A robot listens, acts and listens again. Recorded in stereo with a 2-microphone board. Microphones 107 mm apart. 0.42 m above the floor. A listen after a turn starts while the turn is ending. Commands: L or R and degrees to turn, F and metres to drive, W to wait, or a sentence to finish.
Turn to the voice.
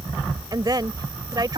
R40
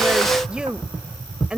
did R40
R10
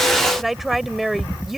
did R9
Found it: a woman speaking, straight ahead.